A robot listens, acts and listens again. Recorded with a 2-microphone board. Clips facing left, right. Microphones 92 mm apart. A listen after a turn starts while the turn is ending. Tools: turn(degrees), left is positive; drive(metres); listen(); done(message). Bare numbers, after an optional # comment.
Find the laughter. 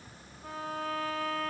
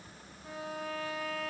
listen()
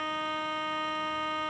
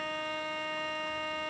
listen()
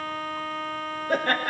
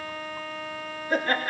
# The laughter: about 60° left or 120° left.
turn(60)
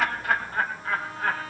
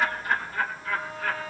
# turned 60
# So it is at 45° left.
turn(45)
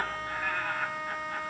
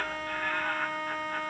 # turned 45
done("Found it: laughter, straight ahead, 2 to 4 m away.")